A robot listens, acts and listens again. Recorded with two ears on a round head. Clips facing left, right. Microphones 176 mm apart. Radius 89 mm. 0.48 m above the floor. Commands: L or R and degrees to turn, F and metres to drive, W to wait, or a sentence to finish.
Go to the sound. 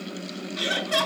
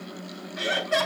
L40
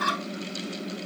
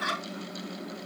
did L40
L100
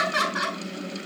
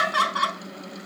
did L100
L25
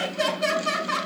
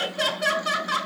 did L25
R10
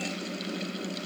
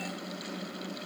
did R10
W
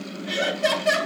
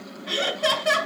F1.0
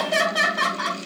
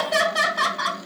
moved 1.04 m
F1.0
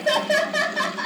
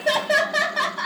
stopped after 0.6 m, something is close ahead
Something is in my way. I am facing the laughter but have not reached it.